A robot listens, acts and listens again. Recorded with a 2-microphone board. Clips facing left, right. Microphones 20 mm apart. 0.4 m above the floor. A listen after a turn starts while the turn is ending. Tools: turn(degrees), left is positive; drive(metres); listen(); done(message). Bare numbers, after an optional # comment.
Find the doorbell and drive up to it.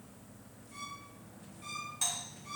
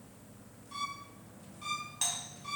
# The doorbell: about 30° right or 150° right.
turn(-30)
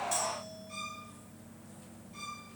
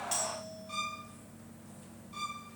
listen()
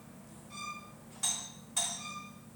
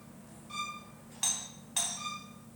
# So it is at 120° right.
turn(-120)
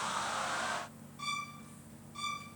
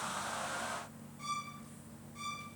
listen()
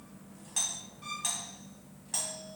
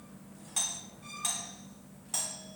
drive(1.0)
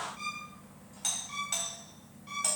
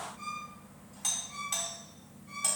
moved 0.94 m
# The doorbell is now 10° left.
turn(10)
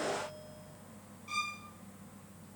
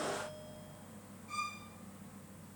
listen()
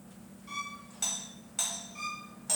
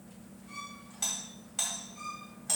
drive(1.0)
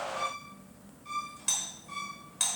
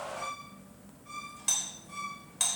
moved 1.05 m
drive(1.0)
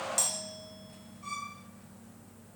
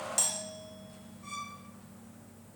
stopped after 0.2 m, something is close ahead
done("Arrived at the doorbell, straight ahead.")